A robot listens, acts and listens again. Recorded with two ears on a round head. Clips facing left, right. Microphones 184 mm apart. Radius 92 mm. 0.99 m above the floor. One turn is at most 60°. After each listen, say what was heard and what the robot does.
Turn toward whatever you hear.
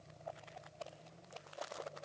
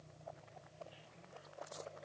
Keep listening.
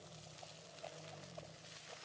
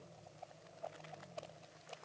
Keep listening.
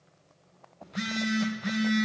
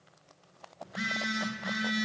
The phone buzzing: about 40° left or 140° left. Turn 40° left.
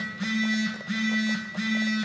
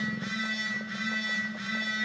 So it is at 100° left. Turn 60° left.
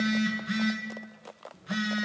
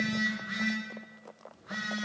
The phone buzzing is now 40° left. Turn 40° left.
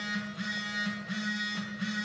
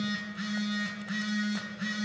The phone buzzing is now 10° right. Turn 10° right.
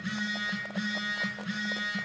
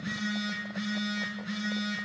Facing the phone buzzing.